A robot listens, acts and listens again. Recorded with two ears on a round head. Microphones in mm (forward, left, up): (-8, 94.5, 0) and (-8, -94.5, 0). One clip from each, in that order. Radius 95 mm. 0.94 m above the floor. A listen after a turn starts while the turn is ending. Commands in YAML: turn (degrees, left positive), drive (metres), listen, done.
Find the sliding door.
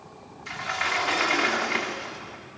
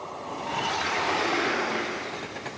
turn: 60
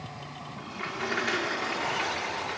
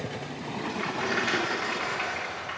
done: "Facing the sliding door, 2 to 4 m away."